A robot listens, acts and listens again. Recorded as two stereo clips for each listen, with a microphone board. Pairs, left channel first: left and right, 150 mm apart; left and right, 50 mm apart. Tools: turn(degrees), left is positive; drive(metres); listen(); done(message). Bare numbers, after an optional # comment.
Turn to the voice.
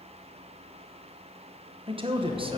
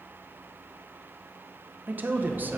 # The man speaking: about 35° right or 145° right.
turn(-35)
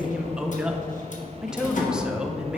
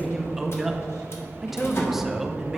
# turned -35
done("Facing the man speaking, under 1 m away.")